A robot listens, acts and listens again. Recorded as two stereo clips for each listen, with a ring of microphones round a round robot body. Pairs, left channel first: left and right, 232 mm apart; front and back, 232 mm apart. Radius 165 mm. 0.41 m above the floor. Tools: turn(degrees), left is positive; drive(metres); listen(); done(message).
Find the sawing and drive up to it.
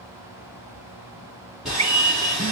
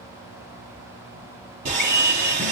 turn(degrees=180)
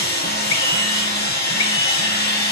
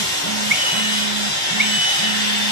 turn(degrees=40)
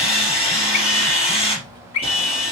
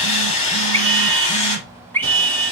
turn(degrees=25)
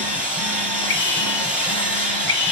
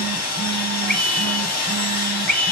drive(metres=1.0)
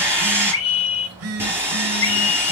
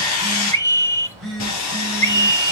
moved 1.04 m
turn(degrees=-10)
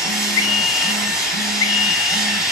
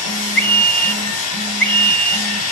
drive(metres=1.0)
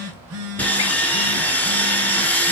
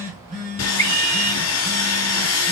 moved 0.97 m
drive(metres=1.0)
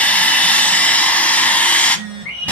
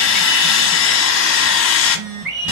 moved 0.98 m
drive(metres=1.0)
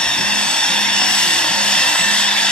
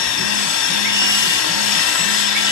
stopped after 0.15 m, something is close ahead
done("Arrived at the sawing, straight ahead.")